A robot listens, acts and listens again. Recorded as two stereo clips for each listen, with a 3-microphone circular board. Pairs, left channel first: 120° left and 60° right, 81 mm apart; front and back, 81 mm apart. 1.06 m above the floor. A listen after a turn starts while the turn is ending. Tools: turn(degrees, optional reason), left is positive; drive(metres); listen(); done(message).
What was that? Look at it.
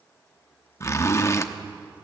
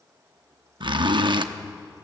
turn(degrees=175, reason="The zipper: 175° left.")
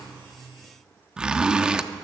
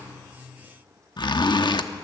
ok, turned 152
turn(degrees=20, reason="The zipper is now 20° left.")
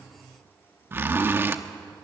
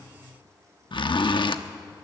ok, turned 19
done("Found it: a zipper, straight ahead, under 1 m away.")